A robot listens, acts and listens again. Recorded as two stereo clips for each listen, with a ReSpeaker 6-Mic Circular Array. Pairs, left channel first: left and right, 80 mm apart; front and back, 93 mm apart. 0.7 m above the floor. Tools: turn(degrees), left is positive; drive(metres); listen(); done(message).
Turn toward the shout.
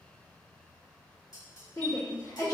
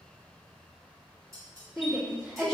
turn(degrees=85)
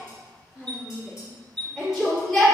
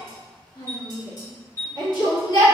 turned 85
done("Facing the shout, 1 to 2 m away.")